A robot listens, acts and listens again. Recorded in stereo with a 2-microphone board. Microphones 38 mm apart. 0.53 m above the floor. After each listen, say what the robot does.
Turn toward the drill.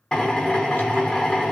Turn 25° left.
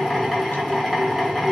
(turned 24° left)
Found it: a drill, straight ahead, under 1 m away.